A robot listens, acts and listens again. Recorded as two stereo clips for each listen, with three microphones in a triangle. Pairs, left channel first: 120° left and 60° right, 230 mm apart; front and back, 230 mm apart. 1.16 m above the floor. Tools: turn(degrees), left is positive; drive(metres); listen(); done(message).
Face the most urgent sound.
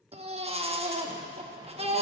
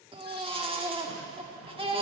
turn(degrees=-120)
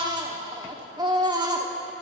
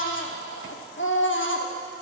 done("Found it: a baby crying, straight ahead.")